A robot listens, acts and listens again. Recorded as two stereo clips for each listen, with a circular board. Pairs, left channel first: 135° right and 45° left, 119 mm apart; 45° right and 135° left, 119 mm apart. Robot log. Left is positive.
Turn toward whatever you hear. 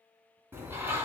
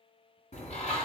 note: The bird: 25° right.
cmd yaw -25
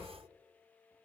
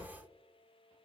end: Facing the bird, 1 to 2 m away.